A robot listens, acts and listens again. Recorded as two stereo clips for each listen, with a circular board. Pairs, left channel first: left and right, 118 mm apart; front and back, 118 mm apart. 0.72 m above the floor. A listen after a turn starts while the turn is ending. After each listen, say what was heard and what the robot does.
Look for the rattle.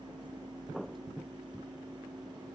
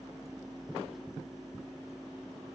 Keep listening.
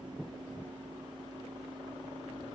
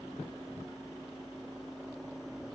Keep listening.
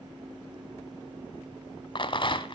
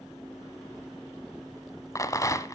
The rattle: 55° left. Turn 55° left.
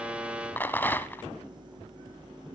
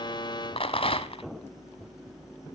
The rattle is now 20° left. Turn 20° left.
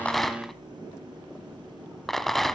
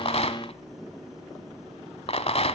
Found it: a rattle, straight ahead, under 1 m away.